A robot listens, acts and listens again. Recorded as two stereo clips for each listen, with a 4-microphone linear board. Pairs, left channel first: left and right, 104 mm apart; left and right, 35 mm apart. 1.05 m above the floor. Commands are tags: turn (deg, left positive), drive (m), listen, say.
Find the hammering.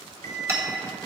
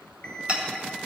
<turn deg="-30"/>
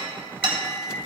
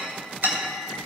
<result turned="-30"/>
<turn deg="-120"/>
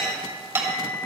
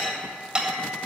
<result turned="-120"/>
<turn deg="-20"/>
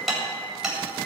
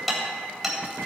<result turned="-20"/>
<say>Found it: hammering, straight ahead, 2 to 4 m away.</say>